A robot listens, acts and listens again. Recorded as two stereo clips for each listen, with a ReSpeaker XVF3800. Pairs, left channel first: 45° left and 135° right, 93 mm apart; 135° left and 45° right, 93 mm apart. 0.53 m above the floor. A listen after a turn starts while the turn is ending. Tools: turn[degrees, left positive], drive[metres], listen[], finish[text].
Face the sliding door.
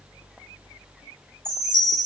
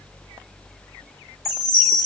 Action: listen[]
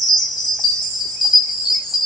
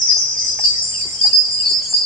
Action: listen[]
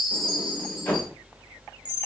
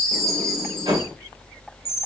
Thought: The sliding door: 25° right.
Action: turn[-25]
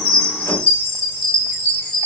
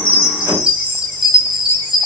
Action: listen[]
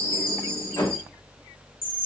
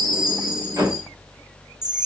Action: finish[Found it: a sliding door, straight ahead.]